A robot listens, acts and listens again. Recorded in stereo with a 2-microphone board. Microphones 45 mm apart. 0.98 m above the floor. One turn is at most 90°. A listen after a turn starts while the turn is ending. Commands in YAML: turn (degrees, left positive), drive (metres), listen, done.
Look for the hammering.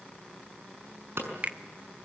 turn: -70
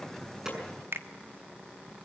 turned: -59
listen: true
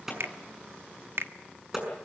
turn: -10
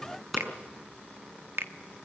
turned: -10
done: "Facing the hammering, over 4 m away."